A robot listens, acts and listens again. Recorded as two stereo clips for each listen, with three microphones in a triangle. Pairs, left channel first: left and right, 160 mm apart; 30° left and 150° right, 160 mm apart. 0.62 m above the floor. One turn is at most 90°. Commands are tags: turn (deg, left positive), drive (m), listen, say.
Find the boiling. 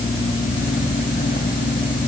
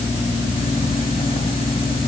<listen/>
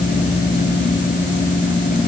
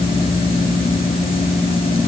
<listen/>
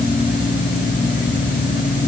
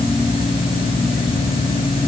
<say>I can't make out boiling to turn to.</say>